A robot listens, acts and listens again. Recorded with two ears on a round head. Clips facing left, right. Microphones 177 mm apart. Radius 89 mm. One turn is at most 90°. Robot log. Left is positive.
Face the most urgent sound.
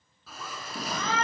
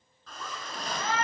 note: The shout: about 65° left or 115° left.
cmd yaw +65
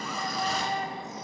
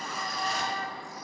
note: So it is at 20° left.
cmd yaw +20
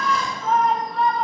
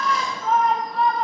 end: Found it: a shout, straight ahead.